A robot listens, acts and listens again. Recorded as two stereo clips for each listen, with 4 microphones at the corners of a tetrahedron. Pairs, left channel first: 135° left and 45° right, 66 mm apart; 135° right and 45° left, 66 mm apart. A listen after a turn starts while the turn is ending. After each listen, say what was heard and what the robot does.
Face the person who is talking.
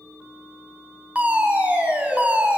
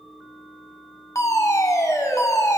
Keep listening.
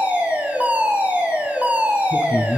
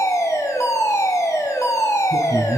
The man speaking: 140° right. Turn 140° right.
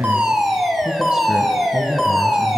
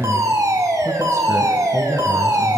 Keep listening.
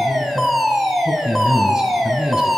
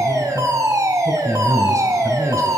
The man speaking is now 35° left. Turn 35° left.
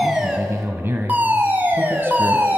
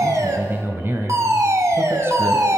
Found it: a man speaking, straight ahead, 1 to 2 m away.